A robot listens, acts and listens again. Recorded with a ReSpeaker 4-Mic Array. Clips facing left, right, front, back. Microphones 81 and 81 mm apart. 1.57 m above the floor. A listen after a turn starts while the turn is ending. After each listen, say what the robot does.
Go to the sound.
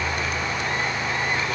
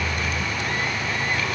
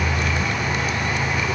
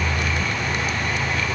Keep listening.
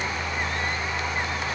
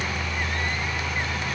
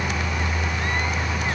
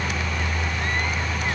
Keep listening.
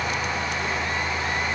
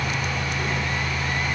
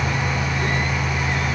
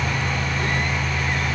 I can't make out anything.